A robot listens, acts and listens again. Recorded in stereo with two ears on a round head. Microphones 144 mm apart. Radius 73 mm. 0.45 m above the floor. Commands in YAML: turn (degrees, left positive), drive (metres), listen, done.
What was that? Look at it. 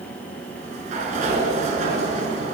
turn: -45
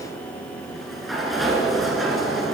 done: "Found it: a sliding door, straight ahead."